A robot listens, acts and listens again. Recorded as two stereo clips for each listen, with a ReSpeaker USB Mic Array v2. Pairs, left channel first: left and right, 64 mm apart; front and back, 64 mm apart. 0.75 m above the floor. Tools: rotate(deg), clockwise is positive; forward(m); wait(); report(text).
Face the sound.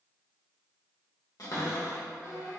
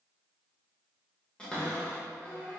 rotate(-75)
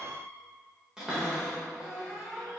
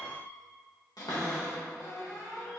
rotate(10)
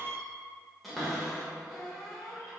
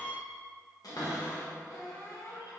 report("Found it: a cupboard door, straight ahead, under 1 m away.")